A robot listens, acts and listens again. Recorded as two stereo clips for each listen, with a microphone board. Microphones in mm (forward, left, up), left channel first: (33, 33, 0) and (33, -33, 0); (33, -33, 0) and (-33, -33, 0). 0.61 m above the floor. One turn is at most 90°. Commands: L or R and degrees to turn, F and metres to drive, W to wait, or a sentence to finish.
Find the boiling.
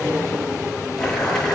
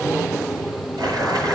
L90
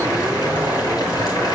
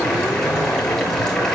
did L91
L80
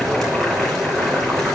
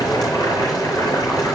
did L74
Found it: boiling, straight ahead, over 4 m away.